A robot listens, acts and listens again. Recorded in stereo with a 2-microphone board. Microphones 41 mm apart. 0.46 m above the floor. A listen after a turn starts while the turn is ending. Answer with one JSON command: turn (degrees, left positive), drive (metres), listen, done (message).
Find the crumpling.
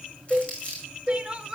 {"turn": 30}
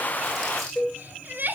{"listen": true}
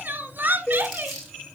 {"done": "Facing the crumpling."}